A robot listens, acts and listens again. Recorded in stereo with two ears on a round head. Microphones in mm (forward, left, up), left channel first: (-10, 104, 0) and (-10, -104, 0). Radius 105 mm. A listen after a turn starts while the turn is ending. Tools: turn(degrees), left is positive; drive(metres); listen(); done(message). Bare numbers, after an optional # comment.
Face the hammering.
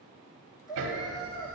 # The hammering: about 55° right or 125° right.
turn(-55)
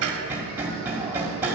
# So it is at 10° right.
turn(-10)
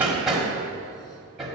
done("Found it: hammering, straight ahead, 1 to 2 m away.")